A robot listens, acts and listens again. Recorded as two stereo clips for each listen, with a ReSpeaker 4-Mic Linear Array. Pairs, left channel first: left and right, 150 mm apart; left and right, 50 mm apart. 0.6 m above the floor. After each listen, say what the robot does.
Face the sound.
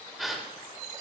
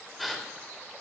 Turn 30° left.
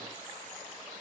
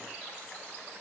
Keep listening.
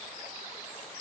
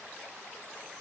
I heard a gasp, but can't make it out now. It was about 30° right or 150° left.